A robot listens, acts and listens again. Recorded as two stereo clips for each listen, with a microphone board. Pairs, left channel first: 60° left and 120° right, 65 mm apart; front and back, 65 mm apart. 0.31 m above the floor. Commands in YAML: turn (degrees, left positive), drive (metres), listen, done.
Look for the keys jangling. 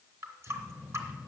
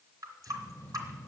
turn: -65
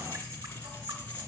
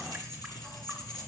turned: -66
done: "Found it: keys jangling, straight ahead."